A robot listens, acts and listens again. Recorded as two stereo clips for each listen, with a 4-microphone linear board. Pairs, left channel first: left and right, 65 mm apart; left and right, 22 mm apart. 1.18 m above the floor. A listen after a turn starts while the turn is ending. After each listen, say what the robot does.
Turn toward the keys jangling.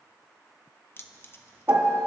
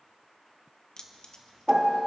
Turn 35° left.
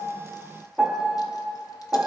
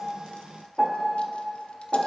Keep listening.
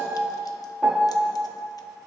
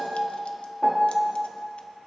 Keep listening.
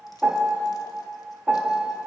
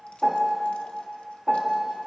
I heard keys jangling, but can't make it out now. It was about straight ahead or 110° left.